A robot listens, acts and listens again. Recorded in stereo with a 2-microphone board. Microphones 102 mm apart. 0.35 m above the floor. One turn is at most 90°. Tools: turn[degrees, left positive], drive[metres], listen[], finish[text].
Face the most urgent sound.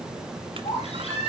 Action: turn[90]
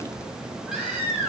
Thought: So it is at 10° right.
Action: turn[-10]
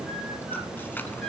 Action: listen[]
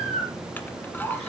Action: finish[Found it: a baby crying, straight ahead.]